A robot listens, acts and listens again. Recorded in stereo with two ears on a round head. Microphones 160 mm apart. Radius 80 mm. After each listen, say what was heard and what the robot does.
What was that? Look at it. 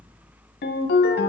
The ringtone: about 60° left or 120° left. Turn 60° left.
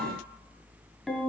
Found it: a ringtone, straight ahead.